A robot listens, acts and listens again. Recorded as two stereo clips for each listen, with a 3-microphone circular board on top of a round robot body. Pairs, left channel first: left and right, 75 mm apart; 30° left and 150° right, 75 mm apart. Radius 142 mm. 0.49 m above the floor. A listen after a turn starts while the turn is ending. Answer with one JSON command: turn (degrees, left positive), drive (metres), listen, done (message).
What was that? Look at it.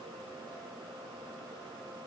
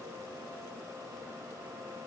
{"listen": true}
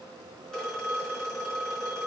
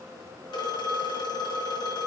{"done": "Found it: a phone ringing, straight ahead."}